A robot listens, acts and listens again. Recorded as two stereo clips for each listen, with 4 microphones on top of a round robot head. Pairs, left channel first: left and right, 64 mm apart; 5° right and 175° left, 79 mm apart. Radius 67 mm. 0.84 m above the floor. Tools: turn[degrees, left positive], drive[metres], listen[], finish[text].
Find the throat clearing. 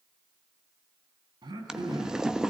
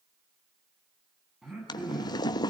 Thought: The throat clearing: 95° right.
Action: turn[-95]
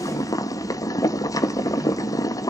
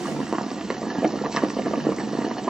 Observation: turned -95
Action: listen[]
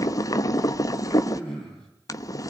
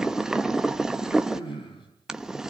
Thought: The throat clearing is now 10° left.
Action: turn[10]
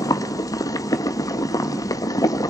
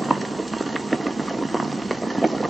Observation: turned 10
Action: listen[]
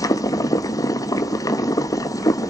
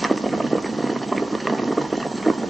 Action: listen[]
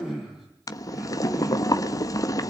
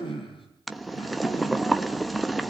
Action: finish[Found it: throat clearing, straight ahead, over 4 m away.]